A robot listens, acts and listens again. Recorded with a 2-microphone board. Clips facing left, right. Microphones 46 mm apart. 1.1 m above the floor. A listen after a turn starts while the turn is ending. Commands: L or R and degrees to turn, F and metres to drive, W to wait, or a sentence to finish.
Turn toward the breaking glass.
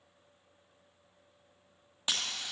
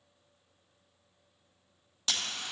L20
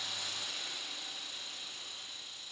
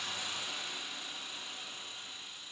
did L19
W
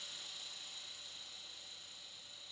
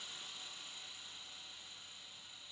I heard breaking glass, but can't make it out now. It was about straight ahead or 140° left.